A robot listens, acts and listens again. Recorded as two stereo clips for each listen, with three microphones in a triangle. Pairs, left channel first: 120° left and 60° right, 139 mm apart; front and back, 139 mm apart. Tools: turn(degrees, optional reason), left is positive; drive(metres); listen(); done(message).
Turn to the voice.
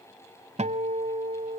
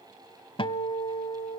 listen()
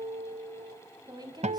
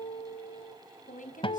done("Found it: a woman speaking, straight ahead.")